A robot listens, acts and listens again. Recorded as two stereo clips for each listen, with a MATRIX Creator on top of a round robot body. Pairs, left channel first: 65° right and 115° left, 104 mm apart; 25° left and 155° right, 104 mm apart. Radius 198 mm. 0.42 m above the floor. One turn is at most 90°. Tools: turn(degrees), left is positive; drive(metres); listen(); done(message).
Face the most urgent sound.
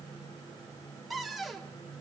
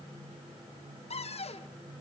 listen()
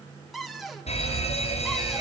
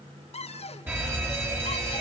turn(degrees=-90)
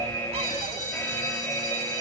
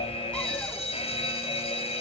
turn(degrees=-10)
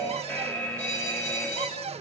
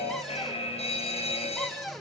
done("Facing the fire alarm.")